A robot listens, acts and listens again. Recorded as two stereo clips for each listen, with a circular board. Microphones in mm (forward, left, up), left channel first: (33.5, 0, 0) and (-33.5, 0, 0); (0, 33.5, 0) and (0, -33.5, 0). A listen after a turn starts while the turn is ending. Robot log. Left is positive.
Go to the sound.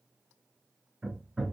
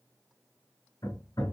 note: The hammering: 100° left.
cmd yaw +100
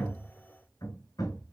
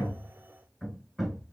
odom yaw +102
cmd fwd 1.0
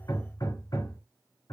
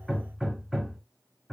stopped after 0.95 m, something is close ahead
end: I am next to the hammering.